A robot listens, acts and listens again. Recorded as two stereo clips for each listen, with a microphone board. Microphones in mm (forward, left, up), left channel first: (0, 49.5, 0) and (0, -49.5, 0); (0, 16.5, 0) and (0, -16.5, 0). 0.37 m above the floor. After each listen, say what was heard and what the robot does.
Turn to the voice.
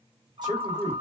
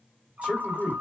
The man speaking: about 50° right or 130° right. Turn 50° right.
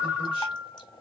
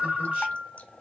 Keep listening.
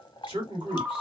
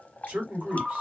So it is at 75° right. Turn 75° right.
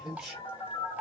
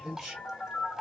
Facing the man speaking, 2 to 4 m away.